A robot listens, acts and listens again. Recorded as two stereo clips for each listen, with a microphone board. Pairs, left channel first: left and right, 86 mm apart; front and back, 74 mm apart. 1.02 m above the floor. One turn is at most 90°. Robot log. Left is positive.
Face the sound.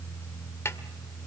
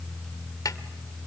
note: The snare drum: 30° left.
cmd yaw +30
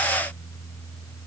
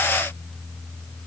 cmd idle
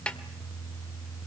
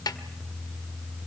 note: The snare drum is now 10° left.
cmd yaw +10
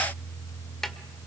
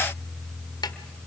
end: Facing the snare drum, 1 to 2 m away.